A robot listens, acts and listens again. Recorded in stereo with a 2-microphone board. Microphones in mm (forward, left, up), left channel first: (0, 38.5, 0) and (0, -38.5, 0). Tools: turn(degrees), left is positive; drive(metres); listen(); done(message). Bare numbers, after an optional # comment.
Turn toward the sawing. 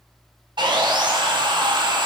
turn(-90)
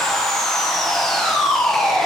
done("Found it: sawing, straight ahead, under 1 m away.")